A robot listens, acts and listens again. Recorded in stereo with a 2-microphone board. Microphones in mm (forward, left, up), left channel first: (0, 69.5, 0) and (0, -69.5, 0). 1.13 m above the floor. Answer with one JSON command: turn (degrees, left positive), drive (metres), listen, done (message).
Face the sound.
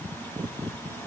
{"listen": true}
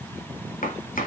{"turn": 90}
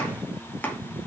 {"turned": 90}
{"turn": 10}
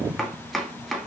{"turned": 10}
{"done": "Found it: chopping, straight ahead, 2 to 4 m away."}